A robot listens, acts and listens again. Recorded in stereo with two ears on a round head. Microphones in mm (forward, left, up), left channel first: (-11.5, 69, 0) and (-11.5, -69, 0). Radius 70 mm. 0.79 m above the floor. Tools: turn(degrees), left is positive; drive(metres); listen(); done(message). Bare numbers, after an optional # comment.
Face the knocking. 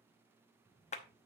listen()
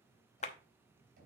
# The knocking: about 65° right or 115° right.
turn(-65)
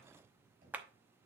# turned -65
# So it is at 50° right.
turn(-50)
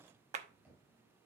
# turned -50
# The knocking is now 10° right.
turn(-10)
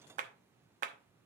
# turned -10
listen()
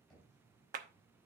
done("Found it: knocking, straight ahead.")